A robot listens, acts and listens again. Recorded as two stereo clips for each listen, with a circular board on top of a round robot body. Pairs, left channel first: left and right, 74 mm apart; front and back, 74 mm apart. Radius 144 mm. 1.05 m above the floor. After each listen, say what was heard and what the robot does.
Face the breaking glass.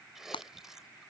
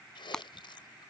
The breaking glass: 80° left. Turn 80° left.
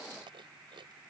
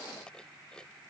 I heard breaking glass from this way, but can't make it out now.